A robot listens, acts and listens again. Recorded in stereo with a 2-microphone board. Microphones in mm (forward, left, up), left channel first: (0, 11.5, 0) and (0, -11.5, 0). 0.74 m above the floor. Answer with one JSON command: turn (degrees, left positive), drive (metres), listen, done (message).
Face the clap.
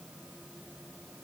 {"listen": true}
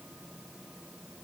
{"listen": true}
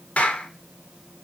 {"turn": 90}
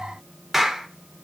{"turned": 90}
{"turn": -10}
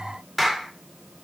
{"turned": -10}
{"done": "Facing the clap."}